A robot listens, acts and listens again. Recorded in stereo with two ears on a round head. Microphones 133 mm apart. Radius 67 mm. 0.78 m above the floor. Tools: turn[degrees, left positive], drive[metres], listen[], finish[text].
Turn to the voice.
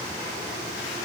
Action: listen[]
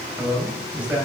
Action: turn[-30]
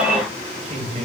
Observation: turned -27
Thought: So it is at 135° right.
Action: turn[-135]
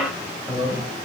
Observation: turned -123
Action: finish[Found it: a man speaking, straight ahead.]